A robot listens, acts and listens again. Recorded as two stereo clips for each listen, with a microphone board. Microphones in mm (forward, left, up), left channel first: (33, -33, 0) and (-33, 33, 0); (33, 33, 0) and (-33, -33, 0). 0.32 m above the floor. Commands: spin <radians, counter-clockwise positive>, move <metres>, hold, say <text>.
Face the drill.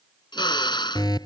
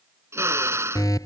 spin -1.31
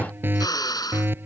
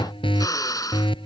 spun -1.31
say Found it: a drill, straight ahead.